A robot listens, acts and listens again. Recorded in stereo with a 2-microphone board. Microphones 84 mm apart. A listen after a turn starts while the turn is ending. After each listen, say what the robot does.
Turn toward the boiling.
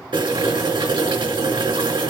Turn 90° right.
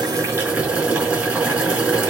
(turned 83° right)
Turn 15° right.
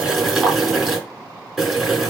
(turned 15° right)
Facing the boiling, over 4 m away.